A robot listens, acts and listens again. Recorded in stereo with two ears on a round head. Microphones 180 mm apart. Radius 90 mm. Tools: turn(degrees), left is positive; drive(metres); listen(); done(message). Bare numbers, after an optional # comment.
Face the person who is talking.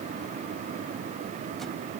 listen()
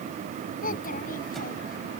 # The child speaking: about 45° left or 135° left.
turn(45)
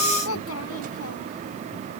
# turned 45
# So it is at 90° left.
turn(90)
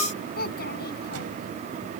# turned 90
# The child speaking is now 50° left.
turn(50)
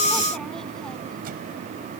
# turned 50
listen()
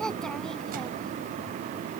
done("Found it: a child speaking, straight ahead.")